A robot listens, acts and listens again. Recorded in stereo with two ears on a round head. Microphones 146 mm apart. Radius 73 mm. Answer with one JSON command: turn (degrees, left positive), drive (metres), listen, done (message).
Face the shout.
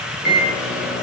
{"listen": true}
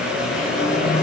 {"listen": true}
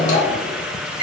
{"done": "I can't make out a shout, only a microwave."}